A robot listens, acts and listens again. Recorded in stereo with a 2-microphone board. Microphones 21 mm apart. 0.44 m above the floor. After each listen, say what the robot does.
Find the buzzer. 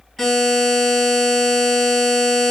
Turn 30° left.
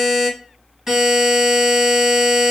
Turn 20° right.
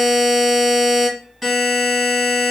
Facing the buzzer, 1 to 2 m away.